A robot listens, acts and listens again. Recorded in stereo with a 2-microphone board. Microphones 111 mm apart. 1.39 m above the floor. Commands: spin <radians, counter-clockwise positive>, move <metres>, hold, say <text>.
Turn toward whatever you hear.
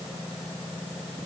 hold
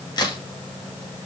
spin 0.70
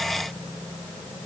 hold
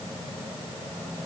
say I heard a crack, but can't make it out now. It was about straight ahead or 100° left.